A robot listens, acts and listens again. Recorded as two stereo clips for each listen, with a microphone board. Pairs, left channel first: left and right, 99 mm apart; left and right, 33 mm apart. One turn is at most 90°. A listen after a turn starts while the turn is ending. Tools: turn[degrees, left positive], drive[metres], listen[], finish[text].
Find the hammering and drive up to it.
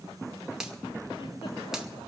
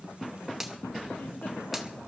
Action: listen[]
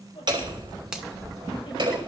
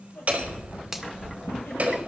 Thought: The hammering: about 50° right or 130° right.
Action: turn[-50]
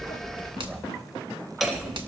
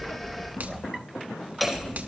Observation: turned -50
Action: drive[1.0]
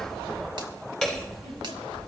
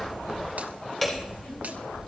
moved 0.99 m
Action: drive[1.0]
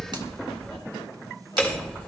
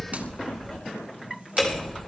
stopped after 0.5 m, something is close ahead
Thought: The hammering is now 15° left.
Action: turn[15]
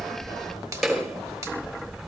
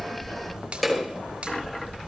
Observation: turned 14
Action: finish[Blocked. The hammering is further on, straight ahead.]